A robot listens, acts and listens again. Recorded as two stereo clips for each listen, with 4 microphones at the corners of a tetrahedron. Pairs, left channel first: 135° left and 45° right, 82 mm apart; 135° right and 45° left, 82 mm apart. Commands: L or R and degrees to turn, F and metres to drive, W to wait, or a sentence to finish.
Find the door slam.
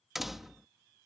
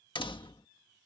R135
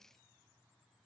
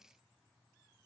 Facing where the door slam came from. I can't hear it now.